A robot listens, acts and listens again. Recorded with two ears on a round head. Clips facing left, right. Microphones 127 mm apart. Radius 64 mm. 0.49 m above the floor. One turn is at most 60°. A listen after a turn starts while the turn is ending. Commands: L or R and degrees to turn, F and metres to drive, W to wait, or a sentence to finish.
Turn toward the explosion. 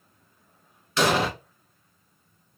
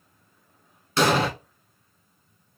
R30
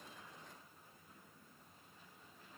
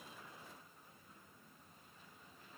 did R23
W
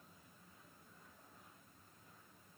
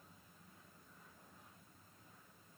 I heard an explosion, but can't make it out now. It was about 5° right or 125° right.